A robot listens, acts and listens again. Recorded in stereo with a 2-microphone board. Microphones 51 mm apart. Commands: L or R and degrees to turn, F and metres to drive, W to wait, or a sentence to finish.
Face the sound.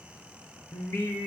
L70
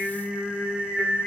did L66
Facing the singing, over 4 m away.